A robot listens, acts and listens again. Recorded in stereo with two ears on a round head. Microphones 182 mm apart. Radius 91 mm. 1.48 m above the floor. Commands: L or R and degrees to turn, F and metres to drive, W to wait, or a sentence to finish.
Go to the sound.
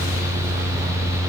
W
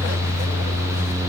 W
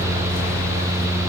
I can't make out anything to turn to.